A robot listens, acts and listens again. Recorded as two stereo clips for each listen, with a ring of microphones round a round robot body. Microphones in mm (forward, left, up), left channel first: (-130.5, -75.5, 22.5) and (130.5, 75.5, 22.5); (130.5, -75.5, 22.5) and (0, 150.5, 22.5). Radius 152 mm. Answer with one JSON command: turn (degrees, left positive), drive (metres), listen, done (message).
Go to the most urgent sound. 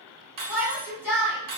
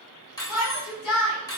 {"turn": -55}
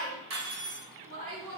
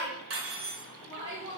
{"turn": 15}
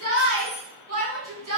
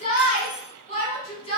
{"drive": 1.0}
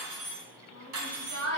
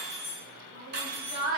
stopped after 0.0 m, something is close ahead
{"done": "Something is in my way. I am facing the shout but have not reached it."}